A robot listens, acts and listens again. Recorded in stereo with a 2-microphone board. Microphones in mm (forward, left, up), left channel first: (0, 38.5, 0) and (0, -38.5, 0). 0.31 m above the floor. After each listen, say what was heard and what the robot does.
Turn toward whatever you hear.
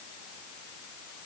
Keep listening.
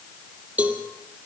The cowbell: about 20° right or 160° right. Turn 20° right.
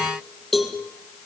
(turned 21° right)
Found it: a cowbell, straight ahead.